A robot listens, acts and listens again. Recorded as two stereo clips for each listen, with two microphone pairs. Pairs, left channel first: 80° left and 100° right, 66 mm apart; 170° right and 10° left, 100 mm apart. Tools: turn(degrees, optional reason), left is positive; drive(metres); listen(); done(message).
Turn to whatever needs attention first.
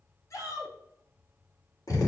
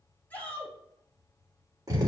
turn(degrees=120, reason="The shout: 120° left.")
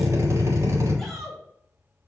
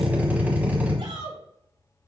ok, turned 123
done("Facing the shout.")